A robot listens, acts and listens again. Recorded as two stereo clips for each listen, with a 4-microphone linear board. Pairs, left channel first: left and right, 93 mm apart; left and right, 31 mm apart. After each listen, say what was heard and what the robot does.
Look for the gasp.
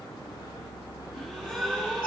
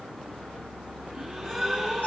Turn 30° left.
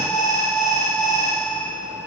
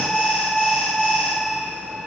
Keep listening.
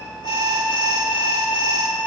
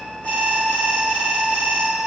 I heard a gasp, but can't make it out now. It was about 30° right or 150° left.